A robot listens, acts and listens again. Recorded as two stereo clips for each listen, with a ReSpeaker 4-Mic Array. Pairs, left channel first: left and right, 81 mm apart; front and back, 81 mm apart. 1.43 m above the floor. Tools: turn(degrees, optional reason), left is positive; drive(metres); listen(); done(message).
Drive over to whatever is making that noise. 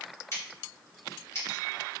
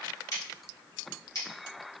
turn(degrees=40, reason="The scissors: 40° left.")
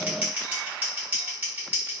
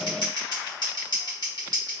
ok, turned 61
turn(degrees=-25, reason="The scissors is now 25° right.")
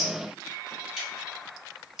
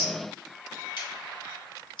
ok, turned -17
drive(metres=1.0)
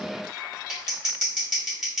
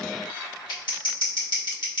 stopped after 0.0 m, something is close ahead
done("Blocked. The scissors is further on, straight ahead.")